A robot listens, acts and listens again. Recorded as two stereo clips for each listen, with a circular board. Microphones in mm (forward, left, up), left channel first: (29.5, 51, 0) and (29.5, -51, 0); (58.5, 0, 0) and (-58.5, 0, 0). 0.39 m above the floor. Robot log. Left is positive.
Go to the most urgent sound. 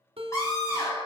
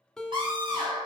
note: The scream: 145° left.
cmd yaw +145
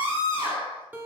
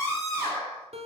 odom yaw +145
note: The scream is now 65° left.
cmd yaw +65
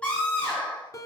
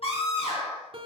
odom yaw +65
note: The scream is now 15° left.
cmd yaw +15
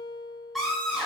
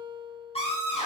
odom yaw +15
cmd fwd 1.0
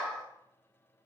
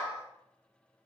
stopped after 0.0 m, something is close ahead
end: Something is in my way. I am facing the scream but have not reached it.